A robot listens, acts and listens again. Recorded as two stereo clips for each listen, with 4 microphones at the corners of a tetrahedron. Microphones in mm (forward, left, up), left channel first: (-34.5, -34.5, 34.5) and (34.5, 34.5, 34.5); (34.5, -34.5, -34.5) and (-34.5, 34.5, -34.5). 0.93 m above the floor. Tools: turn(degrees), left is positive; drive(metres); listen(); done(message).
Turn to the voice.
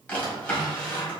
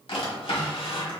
listen()
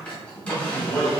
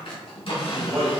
turn(degrees=165)
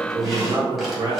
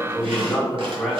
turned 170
turn(degrees=50)
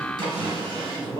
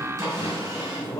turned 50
turn(degrees=10)
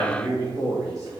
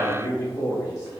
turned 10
done("Facing the man speaking, 1 to 2 m away.")